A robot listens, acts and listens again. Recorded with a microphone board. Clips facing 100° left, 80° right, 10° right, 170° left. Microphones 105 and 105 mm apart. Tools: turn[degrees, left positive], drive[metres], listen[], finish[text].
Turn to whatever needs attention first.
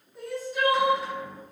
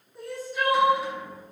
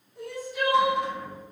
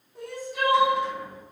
Thought: The crying: 170° right.
Action: turn[-170]
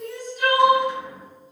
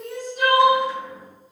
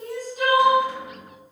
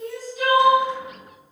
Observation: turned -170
Thought: The crying is now 60° right.
Action: turn[-60]
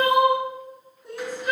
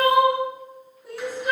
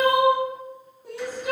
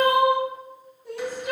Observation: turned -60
Action: finish[Facing the crying, 1 to 2 m away.]